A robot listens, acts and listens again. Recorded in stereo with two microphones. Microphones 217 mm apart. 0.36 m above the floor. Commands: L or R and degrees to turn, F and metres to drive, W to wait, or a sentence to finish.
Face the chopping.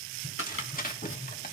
L70
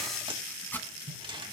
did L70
L10
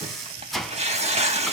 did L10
Found it: chopping, straight ahead.